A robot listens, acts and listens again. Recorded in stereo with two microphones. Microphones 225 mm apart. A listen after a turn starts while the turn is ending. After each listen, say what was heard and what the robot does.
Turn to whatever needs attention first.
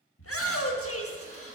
Turn 90° left.
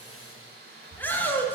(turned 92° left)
So it is at 10° left. Turn 10° left.
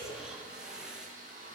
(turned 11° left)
Facing the shout.